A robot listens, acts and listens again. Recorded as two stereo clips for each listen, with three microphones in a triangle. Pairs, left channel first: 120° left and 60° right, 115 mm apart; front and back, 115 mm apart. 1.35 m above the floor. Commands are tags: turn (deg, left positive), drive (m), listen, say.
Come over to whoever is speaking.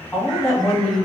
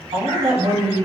<turn deg="-170"/>
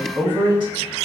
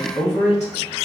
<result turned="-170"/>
<turn deg="-10"/>
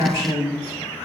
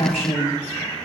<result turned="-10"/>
<drive m="1.0"/>
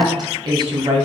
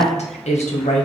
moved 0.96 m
<drive m="1.0"/>
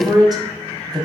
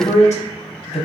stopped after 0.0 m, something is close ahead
<say>I am next to the woman speaking.</say>